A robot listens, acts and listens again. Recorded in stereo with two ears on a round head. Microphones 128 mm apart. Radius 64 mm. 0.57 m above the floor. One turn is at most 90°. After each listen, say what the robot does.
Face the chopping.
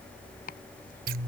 Turn 70° left.
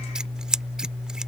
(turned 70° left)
Keep listening.
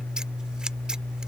Keep listening.
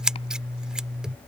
I heard chopping, but can't make it out now. It was about straight ahead or 40° left.